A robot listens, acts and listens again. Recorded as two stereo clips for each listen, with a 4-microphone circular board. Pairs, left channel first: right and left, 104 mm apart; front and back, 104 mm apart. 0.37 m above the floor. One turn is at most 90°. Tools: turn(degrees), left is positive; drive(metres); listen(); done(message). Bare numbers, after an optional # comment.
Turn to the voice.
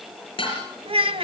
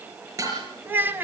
# The child speaking: 110° left.
turn(90)
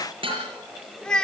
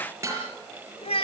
done("Facing the child speaking.")